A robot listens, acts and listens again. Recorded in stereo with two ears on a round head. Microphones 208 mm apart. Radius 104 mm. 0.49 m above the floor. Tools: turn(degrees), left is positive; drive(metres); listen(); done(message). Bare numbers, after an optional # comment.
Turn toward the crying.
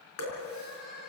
# The crying: about 65° left or 115° left.
turn(65)
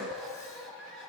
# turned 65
done("Facing the crying, over 4 m away.")